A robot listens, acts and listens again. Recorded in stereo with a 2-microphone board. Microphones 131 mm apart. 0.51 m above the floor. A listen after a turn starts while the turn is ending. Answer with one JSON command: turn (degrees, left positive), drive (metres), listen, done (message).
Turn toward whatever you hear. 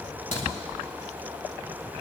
{"turn": 75}
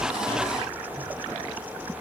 {"listen": true}
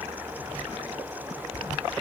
{"done": "I heard a crack, but can't make it out now. It was about straight ahead or 30° left."}